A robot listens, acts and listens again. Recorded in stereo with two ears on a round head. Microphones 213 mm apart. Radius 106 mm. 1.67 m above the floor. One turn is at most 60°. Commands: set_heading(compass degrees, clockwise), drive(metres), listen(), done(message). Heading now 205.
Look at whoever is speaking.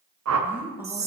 set_heading(235)
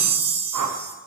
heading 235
listen()
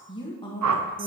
set_heading(215)
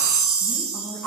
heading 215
listen()
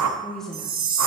done("Facing the woman speaking.")